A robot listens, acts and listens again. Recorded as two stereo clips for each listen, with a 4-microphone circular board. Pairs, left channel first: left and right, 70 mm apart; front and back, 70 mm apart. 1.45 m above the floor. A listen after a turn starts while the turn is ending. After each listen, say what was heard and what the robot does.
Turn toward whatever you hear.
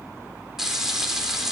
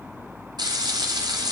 The frying: 175° right. Turn 175° right.
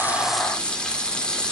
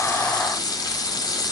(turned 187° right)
The frying is now 15° left. Turn 15° left.
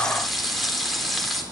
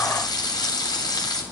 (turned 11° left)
Facing the frying.